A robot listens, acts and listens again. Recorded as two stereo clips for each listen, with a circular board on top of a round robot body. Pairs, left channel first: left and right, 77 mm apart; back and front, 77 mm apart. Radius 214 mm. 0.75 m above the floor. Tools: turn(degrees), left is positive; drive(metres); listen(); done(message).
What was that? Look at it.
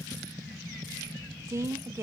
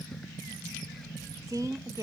turn(degrees=-40)
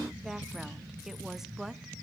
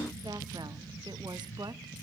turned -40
listen()
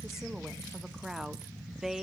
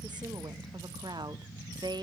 done("Facing the woman speaking, 1 to 2 m away.")